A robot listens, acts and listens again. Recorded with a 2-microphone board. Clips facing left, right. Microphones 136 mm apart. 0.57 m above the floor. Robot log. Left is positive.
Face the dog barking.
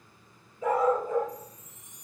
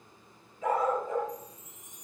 note: The dog barking: about 30° left or 150° left.
cmd yaw +30
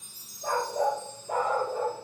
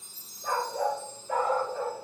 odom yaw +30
note: So it is at 110° left.
cmd yaw +110
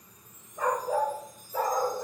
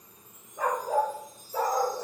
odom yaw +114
note: The dog barking is now 15° right.
cmd yaw -15
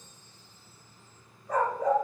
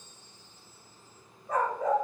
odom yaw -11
end: Found it: a dog barking, straight ahead.